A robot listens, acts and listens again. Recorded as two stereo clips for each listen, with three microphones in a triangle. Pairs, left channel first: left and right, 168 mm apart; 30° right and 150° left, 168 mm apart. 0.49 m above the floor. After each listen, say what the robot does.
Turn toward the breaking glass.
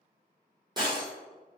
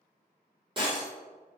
Turn 150° right.
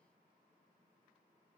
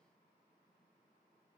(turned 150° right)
I heard breaking glass from this way, but can't make it out now.